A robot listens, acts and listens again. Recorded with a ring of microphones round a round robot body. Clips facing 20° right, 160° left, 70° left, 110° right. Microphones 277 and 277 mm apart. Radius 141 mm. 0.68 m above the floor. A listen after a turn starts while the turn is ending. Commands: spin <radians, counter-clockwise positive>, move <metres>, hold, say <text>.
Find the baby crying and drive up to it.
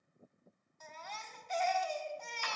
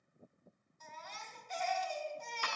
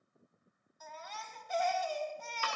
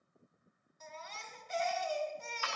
spin -0.87
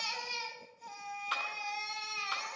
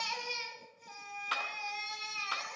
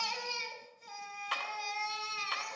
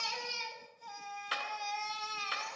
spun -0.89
move 1.0
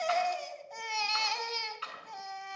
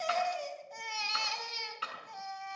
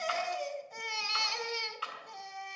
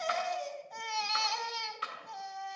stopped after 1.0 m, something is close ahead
say Arrived at the baby crying, straight ahead.